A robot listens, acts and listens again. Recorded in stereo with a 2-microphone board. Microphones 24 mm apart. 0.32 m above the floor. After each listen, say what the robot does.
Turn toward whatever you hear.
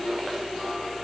Keep listening.
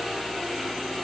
Keep listening.
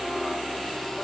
I can't make out anything to turn to.